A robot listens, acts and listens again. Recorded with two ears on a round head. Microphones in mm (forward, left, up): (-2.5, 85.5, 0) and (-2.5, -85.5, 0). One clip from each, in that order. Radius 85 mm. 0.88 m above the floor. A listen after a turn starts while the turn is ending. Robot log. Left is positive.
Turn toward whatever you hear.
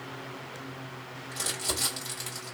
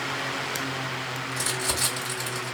cmd yaw +30
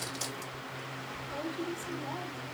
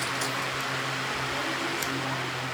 cmd idle
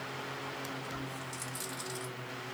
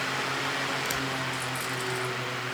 cmd idle
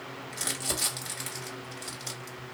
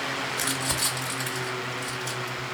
note: So it is at 135° left.
cmd yaw +135
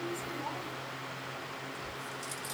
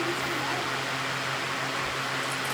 cmd idle
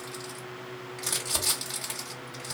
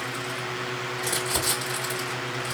note: The crumpling is now 30° left.
cmd yaw +30
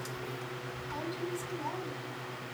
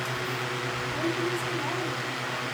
end: Facing the crumpling.